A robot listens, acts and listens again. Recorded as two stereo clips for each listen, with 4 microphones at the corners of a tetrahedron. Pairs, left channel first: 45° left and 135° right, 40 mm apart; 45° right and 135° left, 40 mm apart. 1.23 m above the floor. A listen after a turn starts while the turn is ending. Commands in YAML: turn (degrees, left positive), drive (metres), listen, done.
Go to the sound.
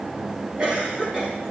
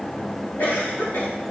turn: -70
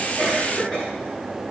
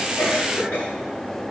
turn: -10
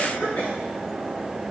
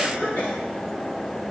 drive: 1.0
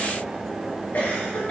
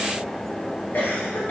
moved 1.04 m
drive: 1.0
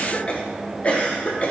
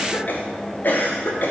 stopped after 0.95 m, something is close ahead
turn: -10
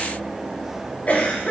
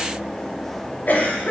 done: "I am next to the cough."